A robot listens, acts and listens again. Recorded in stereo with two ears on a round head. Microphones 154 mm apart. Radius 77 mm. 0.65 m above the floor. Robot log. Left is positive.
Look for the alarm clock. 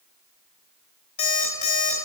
note: The alarm clock: about 45° left or 135° left.
cmd yaw +45
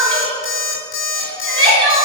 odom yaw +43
note: So it is at 95° left.
cmd yaw +95
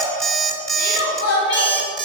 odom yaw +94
end: Found it: an alarm clock, straight ahead.